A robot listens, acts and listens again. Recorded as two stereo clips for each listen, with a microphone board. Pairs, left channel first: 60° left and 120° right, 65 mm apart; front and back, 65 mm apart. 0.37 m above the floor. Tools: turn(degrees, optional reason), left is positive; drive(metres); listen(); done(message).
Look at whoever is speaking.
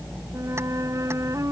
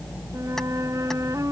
listen()
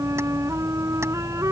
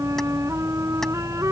listen()
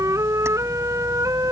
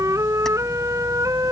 done("I can't make out anyone speaking to turn to.")